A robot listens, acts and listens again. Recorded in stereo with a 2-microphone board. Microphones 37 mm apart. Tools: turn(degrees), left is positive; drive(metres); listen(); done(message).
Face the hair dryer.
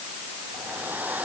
turn(degrees=-55)
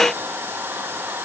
turn(degrees=-70)
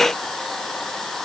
turn(degrees=10)
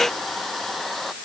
done("Found it: a hair dryer, straight ahead.")